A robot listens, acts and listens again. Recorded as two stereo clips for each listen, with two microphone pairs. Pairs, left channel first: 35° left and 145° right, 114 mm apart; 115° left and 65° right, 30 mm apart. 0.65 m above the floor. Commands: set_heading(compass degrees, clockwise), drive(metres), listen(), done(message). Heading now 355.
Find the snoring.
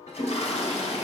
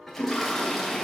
listen()
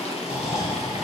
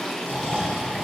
set_heading(55)
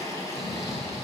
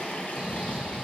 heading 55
done("Found it: snoring, straight ahead.")